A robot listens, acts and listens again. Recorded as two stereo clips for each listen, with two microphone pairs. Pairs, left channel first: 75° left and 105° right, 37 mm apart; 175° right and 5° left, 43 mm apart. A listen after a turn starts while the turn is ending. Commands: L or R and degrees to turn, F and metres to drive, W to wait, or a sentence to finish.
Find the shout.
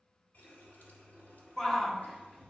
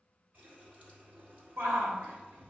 Found it: a shout, straight ahead.